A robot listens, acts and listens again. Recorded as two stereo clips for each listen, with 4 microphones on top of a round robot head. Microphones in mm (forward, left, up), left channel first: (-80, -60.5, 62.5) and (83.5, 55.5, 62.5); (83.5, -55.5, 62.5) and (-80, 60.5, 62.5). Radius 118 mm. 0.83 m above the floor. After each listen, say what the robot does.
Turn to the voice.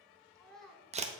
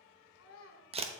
Turn 55° right.
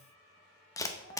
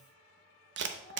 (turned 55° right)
Keep listening.
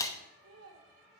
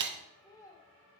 Turn 40° left.
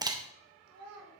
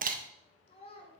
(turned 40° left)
Turn 30° left.
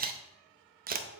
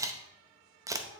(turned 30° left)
Keep listening.
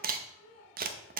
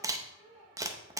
Turn 15° left.
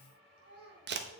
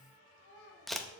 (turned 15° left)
Found it: a child speaking, straight ahead.